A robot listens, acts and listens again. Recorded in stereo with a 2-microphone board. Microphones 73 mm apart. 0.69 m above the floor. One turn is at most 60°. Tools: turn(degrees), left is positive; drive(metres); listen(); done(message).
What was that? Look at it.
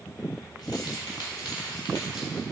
turn(degrees=60)
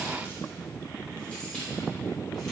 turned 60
turn(degrees=30)
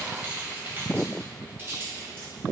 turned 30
turn(degrees=-30)
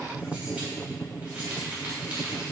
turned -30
turn(degrees=-15)
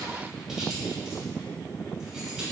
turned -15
listen()
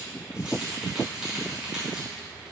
done("Facing the keys jangling.")